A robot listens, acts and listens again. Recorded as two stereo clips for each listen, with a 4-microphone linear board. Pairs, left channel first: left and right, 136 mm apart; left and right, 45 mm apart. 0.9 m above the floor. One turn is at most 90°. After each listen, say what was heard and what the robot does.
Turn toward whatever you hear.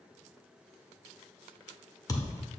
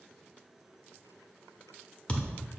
The thud: about 25° left or 155° left. Turn 25° left.
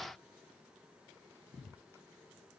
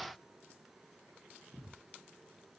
Keep listening.
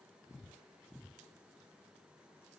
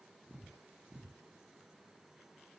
I heard a thud, but can't make it out now. It was about straight ahead or 130° left.